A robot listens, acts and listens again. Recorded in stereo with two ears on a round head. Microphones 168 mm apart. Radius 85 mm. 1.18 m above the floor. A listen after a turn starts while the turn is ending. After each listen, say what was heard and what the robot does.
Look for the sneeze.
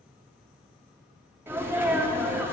Turn 30° right.
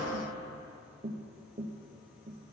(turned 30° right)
Keep listening.
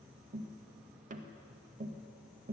I heard a sneeze, but can't make it out now. It was about 20° left or 140° right.